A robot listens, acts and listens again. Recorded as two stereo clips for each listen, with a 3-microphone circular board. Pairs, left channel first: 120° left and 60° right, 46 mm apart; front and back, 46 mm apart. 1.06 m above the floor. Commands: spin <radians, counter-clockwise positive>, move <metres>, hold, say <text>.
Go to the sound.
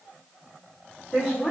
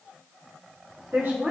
spin -2.88
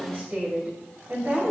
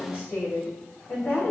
spin -0.87
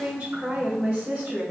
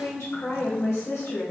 spin -0.35
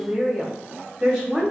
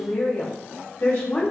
move 1.0
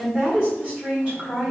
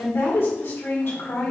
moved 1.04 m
move 1.0
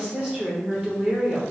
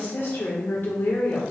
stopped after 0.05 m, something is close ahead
say I am next to the woman speaking.